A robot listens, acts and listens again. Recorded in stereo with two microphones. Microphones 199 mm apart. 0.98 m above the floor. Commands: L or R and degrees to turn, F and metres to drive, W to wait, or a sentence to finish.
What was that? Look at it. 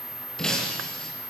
L30
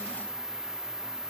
W
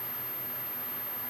I heard breaking glass, but can't make it out now. It was about 25° right or 145° left.